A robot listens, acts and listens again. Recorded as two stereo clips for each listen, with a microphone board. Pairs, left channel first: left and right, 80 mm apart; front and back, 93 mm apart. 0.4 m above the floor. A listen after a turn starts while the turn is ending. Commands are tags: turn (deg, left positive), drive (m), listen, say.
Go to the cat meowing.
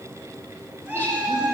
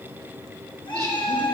<turn deg="-25"/>
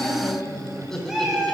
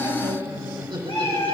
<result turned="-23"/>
<drive m="1.0"/>
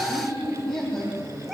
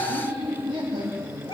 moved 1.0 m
<drive m="1.0"/>
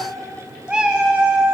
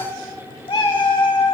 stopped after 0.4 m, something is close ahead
<turn deg="-10"/>
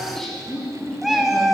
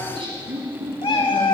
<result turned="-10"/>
<say>Arrived at the cat meowing, straight ahead.</say>